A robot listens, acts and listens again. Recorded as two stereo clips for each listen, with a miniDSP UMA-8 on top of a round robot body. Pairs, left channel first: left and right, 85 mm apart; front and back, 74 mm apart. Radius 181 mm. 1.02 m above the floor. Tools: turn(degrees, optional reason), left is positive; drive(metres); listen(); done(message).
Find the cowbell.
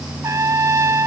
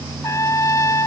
listen()
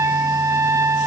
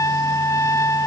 listen()
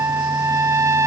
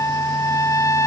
done("I can't make out a cowbell, only a trumpet.")